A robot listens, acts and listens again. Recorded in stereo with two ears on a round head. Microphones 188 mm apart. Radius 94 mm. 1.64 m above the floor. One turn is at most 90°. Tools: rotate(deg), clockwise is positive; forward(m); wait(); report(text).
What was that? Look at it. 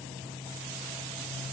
wait()
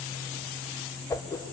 rotate(-30)
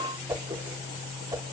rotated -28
rotate(15)
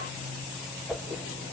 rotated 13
report("Facing the whoosh.")